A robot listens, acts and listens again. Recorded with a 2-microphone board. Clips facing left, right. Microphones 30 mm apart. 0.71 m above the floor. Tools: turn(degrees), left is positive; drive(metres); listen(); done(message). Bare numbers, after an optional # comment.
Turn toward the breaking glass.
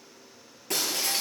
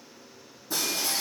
# The breaking glass: about 75° left or 105° left.
turn(75)
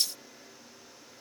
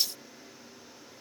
listen()
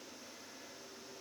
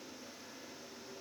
done("I heard breaking glass, but can't make it out now. It was about straight ahead or 30° left.")